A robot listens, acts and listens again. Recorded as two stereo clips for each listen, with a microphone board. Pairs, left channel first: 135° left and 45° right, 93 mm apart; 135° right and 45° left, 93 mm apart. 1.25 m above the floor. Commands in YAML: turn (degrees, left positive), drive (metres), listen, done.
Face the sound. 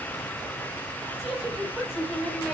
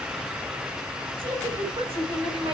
turn: 35
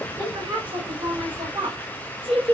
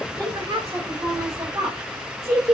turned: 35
turn: -20
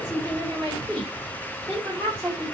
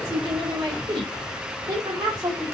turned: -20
turn: -10
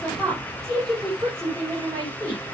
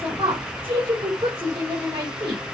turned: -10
done: "Facing the woman speaking, over 4 m away."